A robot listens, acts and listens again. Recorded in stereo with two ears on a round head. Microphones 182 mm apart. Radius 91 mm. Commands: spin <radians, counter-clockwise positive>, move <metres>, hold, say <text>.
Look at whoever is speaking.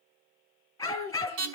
spin -0.87
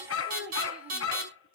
say Found it: a child speaking, straight ahead.